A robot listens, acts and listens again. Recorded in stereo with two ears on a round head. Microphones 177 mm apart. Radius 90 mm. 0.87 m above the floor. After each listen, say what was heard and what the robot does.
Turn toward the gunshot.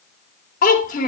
Keep listening.
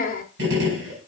The gunshot: about 55° right or 125° right. Turn 55° right.
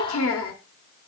Keep listening.
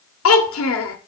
I heard a gunshot, but can't make it out now. It was about straight ahead or 70° right.